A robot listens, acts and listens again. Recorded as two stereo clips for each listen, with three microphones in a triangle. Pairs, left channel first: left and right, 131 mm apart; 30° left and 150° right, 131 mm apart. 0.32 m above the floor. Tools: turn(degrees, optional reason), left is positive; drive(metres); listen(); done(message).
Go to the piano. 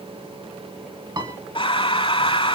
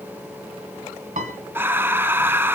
turn(degrees=-145, reason="The piano: 145° right.")
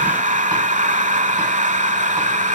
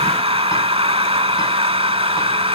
listen()
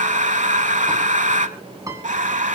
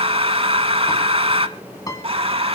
turn(degrees=-30, reason="The piano is now 30° right.")
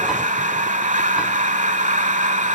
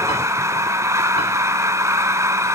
listen()
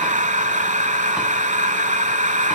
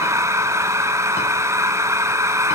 listen()
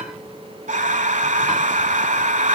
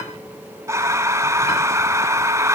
done("Facing where the piano came from. I can't hear it now. I did not reach it.")